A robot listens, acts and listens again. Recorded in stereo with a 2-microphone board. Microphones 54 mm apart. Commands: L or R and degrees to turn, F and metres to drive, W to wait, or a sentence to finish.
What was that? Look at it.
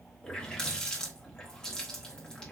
L30
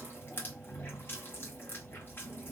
L135
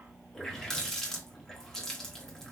Facing the running tap.